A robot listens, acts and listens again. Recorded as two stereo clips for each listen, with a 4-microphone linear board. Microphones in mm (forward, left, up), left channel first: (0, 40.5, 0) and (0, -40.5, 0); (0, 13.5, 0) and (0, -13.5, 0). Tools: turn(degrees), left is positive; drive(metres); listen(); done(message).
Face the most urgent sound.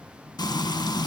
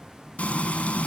listen()
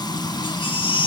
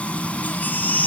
turn(degrees=90)
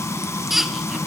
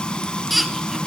done("Found it: a baby crying, straight ahead.")